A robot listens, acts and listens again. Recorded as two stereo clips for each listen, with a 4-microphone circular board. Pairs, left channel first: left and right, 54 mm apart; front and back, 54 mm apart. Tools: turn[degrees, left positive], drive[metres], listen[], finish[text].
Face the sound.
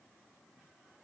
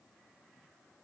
Action: listen[]
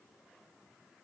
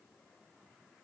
Action: listen[]
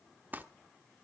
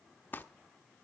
Thought: The crumpling: 40° right.
Action: turn[-40]
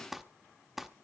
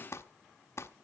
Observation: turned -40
Action: finish[Found it: crumpling, straight ahead.]